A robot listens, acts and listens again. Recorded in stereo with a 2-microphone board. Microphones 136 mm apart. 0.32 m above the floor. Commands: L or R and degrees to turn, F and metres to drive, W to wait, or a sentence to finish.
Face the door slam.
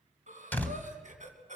L30
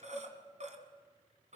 W
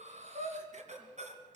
I heard a door slam, but can't make it out now. It was about 20° right or 140° left.